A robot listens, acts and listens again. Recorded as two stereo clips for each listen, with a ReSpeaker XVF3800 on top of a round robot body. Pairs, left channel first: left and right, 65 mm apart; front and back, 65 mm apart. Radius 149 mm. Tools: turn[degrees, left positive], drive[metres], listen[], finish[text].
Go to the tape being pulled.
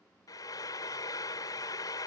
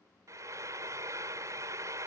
Action: listen[]
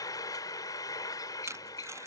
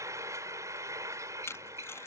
Thought: The tape being pulled: 45° right.
Action: turn[-45]
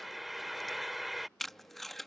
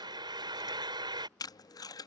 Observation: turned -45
Action: drive[1.0]
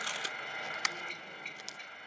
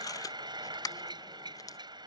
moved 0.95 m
Action: drive[1.0]
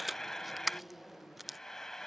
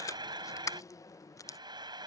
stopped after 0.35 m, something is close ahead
Action: finish[I am next to the tape being pulled.]